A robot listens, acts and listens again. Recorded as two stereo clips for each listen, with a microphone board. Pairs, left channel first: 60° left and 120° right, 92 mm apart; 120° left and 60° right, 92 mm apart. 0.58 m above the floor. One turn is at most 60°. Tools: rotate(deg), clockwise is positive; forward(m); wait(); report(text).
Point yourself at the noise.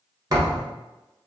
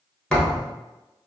rotate(60)
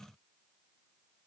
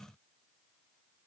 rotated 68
rotate(60)
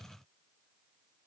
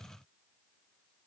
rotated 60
rotate(30)
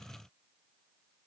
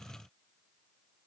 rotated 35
report("Facing where the thud came from. I can't hear it now.")